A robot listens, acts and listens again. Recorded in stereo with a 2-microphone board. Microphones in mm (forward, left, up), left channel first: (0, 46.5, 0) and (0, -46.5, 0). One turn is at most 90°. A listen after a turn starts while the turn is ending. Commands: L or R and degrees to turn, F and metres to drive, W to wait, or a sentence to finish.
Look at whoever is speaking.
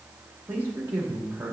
R20
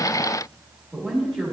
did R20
Found it: a man speaking, straight ahead.